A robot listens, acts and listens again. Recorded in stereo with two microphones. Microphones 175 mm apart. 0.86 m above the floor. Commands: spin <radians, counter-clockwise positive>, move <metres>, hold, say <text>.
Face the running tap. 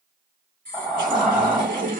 spin -0.87
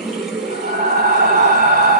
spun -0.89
say Found it: a running tap, straight ahead, 1 to 2 m away.